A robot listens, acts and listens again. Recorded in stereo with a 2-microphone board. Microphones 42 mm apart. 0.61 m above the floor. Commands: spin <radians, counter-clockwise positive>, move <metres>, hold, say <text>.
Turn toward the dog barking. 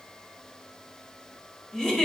hold
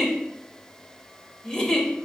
hold
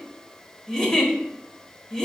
say I can't make out a dog barking to turn to.